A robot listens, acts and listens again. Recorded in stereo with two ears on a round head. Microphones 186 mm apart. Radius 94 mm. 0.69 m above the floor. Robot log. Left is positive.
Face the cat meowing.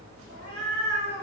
note: The cat meowing: about 45° right or 135° right.
cmd yaw -45
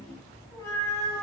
note: So it is at 15° left.
cmd yaw +15
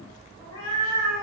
note: The cat meowing is now 20° left.
cmd yaw +20
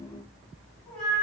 end: Facing the cat meowing.